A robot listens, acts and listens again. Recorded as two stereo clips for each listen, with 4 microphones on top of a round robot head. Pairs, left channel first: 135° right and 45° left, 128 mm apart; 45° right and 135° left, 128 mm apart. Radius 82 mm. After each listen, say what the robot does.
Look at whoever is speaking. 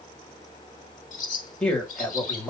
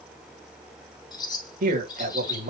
Turn 140° left.
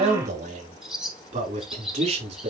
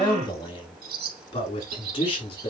Facing the man speaking.